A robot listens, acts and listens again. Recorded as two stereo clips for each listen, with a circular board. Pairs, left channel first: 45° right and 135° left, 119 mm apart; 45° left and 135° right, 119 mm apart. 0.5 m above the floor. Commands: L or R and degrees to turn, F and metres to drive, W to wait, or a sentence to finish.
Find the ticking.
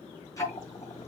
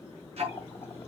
R105
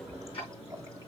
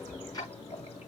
R10
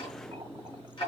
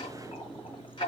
Facing the ticking.